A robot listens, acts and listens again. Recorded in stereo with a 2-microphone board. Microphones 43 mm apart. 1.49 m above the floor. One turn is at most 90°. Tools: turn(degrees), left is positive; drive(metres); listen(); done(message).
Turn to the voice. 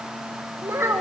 turn(degrees=-70)
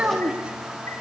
turn(degrees=-25)
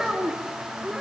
turn(degrees=-10)
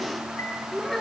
turn(degrees=10)
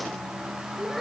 done("Found it: a child speaking, straight ahead, over 4 m away.")